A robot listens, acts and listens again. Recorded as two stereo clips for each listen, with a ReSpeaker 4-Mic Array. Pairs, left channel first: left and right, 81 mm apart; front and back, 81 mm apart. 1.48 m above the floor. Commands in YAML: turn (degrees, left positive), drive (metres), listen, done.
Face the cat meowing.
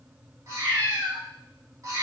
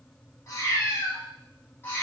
turn: -65
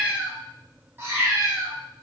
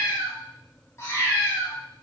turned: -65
turn: -55
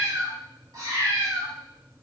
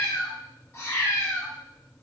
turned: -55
turn: -60
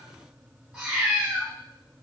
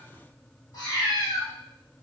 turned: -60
turn: -15
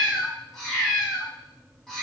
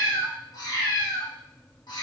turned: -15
done: "Facing the cat meowing, 1 to 2 m away."